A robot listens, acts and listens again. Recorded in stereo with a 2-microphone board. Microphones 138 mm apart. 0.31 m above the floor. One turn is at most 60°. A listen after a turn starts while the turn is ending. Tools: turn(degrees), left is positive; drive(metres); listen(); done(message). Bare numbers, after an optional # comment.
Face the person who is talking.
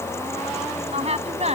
# The woman speaking: about 55° right or 125° right.
turn(-55)
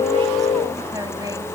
listen()
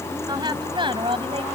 # So it is at 40° right.
turn(-40)
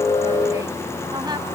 listen()
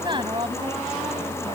# The woman speaking is now 40° right.
turn(-40)
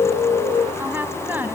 # The woman speaking is now 15° right.
turn(-15)
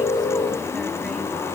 listen()
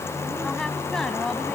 done("Found it: a woman speaking, straight ahead.")